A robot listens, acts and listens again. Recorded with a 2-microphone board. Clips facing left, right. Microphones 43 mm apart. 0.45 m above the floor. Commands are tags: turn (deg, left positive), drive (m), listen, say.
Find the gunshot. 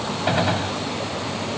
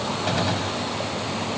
<turn deg="20"/>
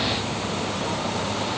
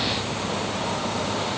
<listen/>
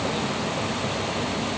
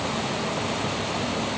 <say>I heard a gunshot, but can't make it out now. It was about straight ahead or 140° left.</say>